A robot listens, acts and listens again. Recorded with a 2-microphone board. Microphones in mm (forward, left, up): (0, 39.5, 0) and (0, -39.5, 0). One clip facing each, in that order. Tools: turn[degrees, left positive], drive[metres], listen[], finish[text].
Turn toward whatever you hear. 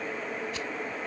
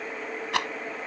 Action: turn[-90]
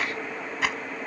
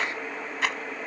Action: finish[Facing the rattle.]